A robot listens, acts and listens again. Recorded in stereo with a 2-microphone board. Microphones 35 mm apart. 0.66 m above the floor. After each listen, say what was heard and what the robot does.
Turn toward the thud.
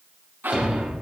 The thud: about 25° right or 155° right. Turn 25° right.
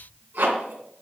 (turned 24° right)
Keep listening.
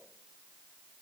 I heard a thud, but can't make it out now. It was about straight ahead or 130° right.